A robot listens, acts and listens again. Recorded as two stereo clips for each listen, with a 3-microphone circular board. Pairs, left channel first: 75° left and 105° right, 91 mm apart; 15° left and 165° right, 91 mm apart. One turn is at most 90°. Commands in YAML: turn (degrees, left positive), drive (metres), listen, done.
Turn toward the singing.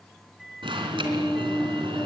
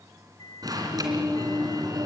turn: 90
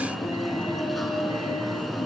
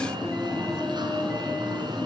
turn: 85
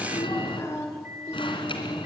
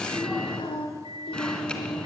turn: 15
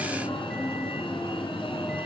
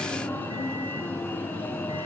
listen: true
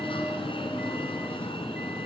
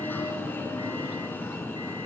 listen: true
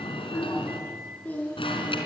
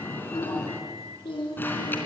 done: "Found it: singing, straight ahead, over 4 m away."